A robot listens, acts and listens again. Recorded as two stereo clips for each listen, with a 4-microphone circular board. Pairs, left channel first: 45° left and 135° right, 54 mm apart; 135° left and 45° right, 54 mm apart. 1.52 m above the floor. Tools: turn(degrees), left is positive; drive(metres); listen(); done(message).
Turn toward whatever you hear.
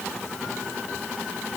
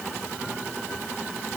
listen()
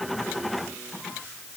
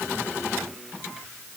listen()
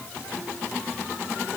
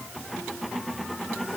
done("I can't make out anything to turn to.")